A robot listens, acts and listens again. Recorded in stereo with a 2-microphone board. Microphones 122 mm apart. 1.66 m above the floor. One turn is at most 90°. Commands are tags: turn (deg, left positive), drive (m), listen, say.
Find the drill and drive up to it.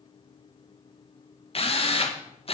<turn deg="50"/>
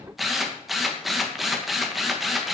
<drive m="1.0"/>
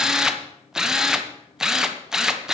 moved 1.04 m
<drive m="1.0"/>
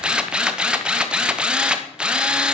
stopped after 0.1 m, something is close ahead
<say>Arrived at the drill, straight ahead.</say>